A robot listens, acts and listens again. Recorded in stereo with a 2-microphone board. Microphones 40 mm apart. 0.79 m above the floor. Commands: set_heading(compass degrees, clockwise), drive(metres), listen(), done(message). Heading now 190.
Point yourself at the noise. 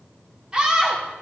set_heading(210)
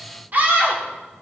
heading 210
set_heading(350)
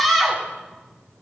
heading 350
done("Facing the scream, 2 to 4 m away.")